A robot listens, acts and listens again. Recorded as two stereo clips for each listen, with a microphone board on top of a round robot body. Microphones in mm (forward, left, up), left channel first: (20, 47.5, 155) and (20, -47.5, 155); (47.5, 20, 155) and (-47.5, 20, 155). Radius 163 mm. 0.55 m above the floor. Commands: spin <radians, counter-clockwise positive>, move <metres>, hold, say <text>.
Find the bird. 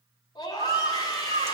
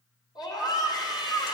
spin -1.22
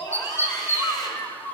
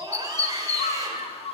spin 0.26
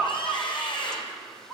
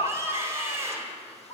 say Facing the bird.